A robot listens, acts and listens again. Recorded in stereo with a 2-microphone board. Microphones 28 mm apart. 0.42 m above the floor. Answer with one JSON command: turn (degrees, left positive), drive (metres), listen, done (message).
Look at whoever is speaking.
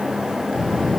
{"turn": 20}
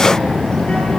{"turn": 140}
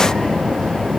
{"turn": 30}
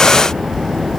{"done": "Facing the child speaking, over 4 m away."}